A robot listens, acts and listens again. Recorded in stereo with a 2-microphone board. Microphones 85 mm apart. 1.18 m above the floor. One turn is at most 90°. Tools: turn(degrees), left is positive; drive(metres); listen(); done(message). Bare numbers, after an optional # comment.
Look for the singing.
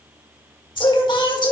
# The singing: about 60° left or 120° left.
turn(60)
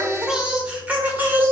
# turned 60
# So it is at 25° right.
turn(-25)
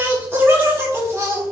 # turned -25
# The singing is now 35° right.
turn(-35)
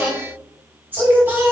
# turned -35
# The singing is now 25° right.
turn(-25)
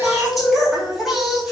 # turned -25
done("Facing the singing, 2 to 4 m away.")